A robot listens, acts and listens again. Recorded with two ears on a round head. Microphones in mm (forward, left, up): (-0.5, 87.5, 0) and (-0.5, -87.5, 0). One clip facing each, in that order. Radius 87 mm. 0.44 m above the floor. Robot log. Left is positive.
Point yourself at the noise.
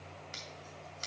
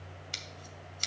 note: The scissors: about 45° right or 135° right.
cmd yaw -45
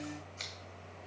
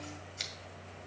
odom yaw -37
note: So it is at 20° right.
cmd yaw -20
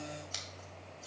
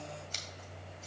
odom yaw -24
end: Found it: scissors, straight ahead, 2 to 4 m away.